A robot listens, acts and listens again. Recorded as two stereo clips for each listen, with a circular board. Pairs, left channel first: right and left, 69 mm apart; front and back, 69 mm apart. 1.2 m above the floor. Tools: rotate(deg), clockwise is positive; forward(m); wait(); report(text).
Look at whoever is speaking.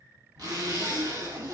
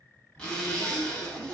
rotate(-55)
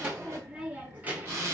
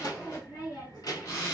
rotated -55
rotate(-25)
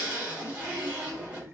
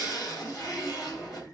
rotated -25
rotate(-35)
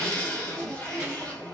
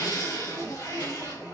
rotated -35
wait()
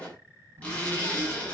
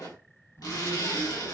rotate(-35)
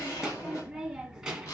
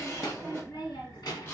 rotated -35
report("Facing the child speaking.")